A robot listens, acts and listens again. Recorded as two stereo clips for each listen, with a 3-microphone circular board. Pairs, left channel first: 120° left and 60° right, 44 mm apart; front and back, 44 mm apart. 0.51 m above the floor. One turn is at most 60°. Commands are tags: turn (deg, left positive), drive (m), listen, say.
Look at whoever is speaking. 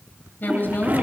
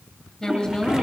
<turn deg="60"/>
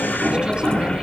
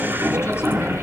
<turn deg="15"/>
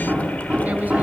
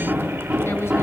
<listen/>
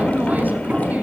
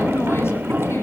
<turn deg="-10"/>
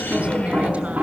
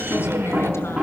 <listen/>
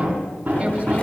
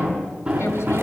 <listen/>
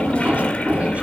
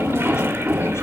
<say>Facing where the woman speaking came from. I can't hear it now.</say>